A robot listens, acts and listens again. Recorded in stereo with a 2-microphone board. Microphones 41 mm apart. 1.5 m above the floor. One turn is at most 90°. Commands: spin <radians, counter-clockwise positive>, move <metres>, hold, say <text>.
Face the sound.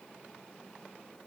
hold
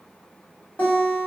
spin 0.70
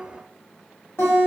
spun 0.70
spin 1.57
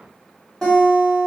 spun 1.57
spin 0.17
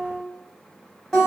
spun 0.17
spin 0.17
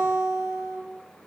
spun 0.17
say Facing the guitar, 1 to 2 m away.